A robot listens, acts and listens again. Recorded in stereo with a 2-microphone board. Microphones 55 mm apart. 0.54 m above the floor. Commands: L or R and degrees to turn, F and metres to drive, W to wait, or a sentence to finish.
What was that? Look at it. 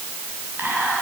R35
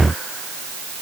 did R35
W
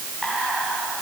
Facing the whispering.